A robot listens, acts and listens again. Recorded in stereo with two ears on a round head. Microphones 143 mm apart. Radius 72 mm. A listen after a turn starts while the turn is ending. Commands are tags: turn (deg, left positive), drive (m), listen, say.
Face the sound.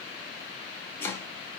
<turn deg="30"/>
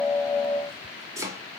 <turn deg="-20"/>
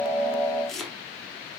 <say>Found it: chopping, straight ahead.</say>